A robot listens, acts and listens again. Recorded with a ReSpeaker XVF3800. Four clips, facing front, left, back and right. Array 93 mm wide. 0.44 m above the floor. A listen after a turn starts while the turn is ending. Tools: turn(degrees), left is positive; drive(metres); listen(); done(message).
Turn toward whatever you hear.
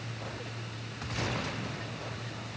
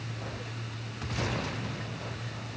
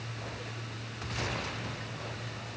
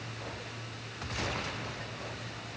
listen()
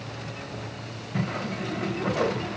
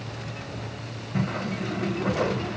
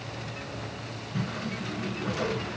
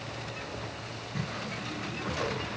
turn(degrees=40)
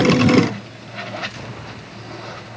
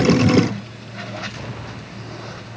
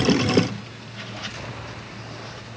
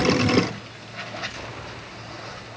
done("Found it: a whoosh, straight ahead.")